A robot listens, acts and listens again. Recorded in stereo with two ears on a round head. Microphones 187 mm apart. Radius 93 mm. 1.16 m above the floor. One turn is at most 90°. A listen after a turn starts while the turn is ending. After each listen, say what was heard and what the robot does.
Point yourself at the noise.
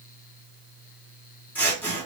Turn 30° left.
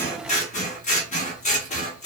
So it is at 140° left. Turn 90° left.
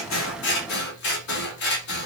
The scissors is now 60° left. Turn 60° left.
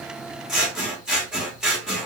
Found it: scissors, straight ahead.